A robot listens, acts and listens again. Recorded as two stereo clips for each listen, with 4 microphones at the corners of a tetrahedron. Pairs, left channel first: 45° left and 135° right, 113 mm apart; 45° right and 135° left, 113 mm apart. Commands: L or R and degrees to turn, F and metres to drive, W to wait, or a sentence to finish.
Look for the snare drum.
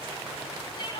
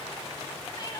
W
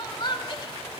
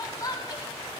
W
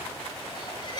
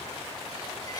I can't make out a snare drum to turn to.